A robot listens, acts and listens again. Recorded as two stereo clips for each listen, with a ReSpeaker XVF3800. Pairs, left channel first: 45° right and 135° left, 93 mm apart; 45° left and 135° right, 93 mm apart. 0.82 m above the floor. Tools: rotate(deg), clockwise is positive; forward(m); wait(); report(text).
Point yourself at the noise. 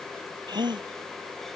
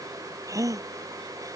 rotate(-170)
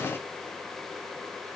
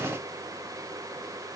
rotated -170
report("I heard a gasp from this way, but can't make it out now.")